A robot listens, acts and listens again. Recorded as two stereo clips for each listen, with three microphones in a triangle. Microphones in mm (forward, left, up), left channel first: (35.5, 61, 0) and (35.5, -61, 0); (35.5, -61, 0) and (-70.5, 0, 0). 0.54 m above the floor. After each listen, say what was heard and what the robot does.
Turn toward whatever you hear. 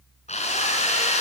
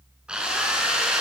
The drill: 65° left. Turn 65° left.
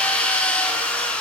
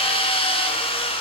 The drill is now 10° left. Turn 10° left.
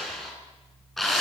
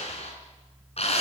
Facing the drill.